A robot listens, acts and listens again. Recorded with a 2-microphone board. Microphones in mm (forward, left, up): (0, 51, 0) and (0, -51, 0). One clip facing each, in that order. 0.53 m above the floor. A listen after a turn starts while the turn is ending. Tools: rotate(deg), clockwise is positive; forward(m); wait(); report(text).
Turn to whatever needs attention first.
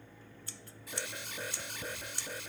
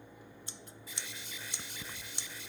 rotate(-65)
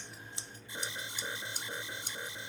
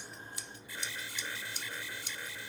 rotate(-25)
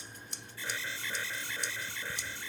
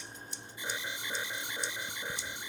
rotate(20)
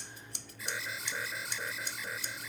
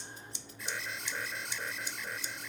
report("Facing the alarm.")